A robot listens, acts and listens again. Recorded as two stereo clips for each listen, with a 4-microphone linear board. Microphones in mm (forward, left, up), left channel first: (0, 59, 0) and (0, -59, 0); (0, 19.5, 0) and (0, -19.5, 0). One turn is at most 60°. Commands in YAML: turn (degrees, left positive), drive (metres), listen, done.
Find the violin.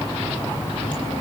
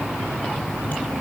listen: true
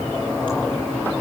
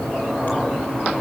listen: true
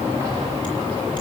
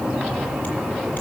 done: "I can't make out a violin."